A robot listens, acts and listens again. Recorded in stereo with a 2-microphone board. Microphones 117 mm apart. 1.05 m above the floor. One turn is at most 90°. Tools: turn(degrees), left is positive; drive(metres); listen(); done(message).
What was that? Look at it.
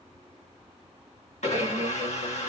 turn(degrees=90)
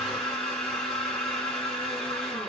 turn(degrees=10)
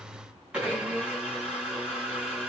turn(degrees=-10)
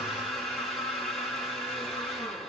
done("Found it: a blender, straight ahead, 1 to 2 m away.")